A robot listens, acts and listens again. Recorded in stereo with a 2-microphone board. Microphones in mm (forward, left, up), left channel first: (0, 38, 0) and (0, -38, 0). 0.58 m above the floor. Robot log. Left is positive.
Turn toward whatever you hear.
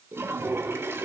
note: The toilet flushing: about 35° right or 145° right.
cmd yaw -35
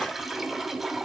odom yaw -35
end: Facing the toilet flushing.